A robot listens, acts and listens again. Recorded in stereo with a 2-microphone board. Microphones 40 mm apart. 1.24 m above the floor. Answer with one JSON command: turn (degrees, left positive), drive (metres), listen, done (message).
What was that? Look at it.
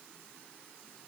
{"listen": true}
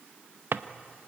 {"turn": -60}
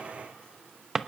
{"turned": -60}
{"turn": -10}
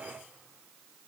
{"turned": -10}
{"listen": true}
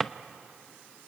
{"done": "Found it: a drawer, straight ahead."}